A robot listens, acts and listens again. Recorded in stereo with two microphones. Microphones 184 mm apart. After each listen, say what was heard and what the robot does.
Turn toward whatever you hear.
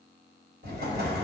The explosion: about 55° right or 125° right. Turn 55° right.
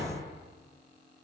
So it is at 70° right. Turn 70° right.
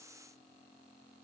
I heard an explosion from this way, but can't make it out now.